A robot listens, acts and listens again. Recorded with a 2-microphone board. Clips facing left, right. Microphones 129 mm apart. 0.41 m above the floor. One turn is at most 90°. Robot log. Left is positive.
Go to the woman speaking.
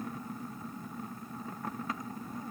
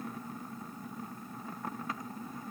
cmd idle
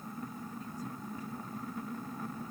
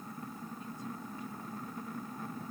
cmd idle
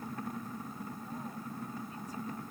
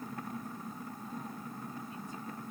end: I can't make out a woman speaking.